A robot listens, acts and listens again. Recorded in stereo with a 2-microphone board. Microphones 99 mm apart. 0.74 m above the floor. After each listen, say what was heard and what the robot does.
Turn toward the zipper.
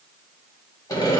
Keep listening.
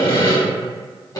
Keep listening.
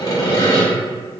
I can't make out a zipper, only sawing.